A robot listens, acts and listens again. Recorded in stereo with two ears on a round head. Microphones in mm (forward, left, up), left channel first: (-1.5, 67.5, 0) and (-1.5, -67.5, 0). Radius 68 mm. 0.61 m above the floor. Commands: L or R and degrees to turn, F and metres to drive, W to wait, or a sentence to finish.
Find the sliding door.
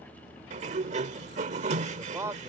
R50
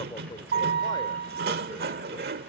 R80
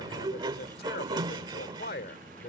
R30
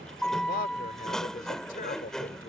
Facing the sliding door.